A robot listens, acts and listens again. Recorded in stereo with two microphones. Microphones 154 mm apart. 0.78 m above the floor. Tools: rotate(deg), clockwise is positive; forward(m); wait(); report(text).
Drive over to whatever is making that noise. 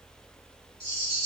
rotate(40)
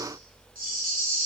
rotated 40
rotate(95)
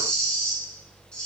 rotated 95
forward(1.0)
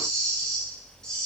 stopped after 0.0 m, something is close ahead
report("Blocked. The rattle is further on, straight ahead.")